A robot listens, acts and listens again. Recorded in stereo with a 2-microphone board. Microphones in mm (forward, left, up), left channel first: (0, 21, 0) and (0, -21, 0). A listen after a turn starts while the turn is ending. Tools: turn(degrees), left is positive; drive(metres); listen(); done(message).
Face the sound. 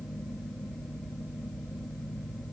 listen()
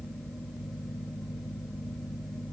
listen()
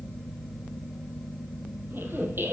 turn(degrees=-50)
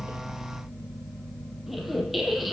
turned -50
done("Found it: a squeak, straight ahead, 1 to 2 m away.")